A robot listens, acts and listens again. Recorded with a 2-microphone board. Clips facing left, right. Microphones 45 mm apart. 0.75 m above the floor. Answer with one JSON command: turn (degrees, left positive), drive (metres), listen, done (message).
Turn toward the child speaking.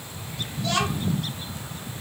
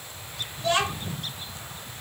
{"turn": -25}
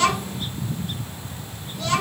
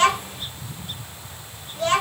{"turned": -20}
{"turn": -135}
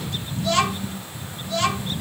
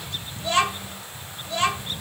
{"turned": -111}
{"turn": -25}
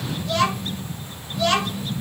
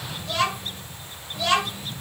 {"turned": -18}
{"done": "Facing the child speaking, 2 to 4 m away."}